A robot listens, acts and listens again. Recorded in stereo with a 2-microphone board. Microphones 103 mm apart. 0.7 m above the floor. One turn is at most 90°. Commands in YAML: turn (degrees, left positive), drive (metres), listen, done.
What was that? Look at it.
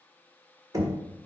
turn: -35
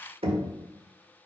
turn: -90
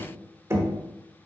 turn: -30
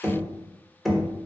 done: "Facing the knocking, 1 to 2 m away."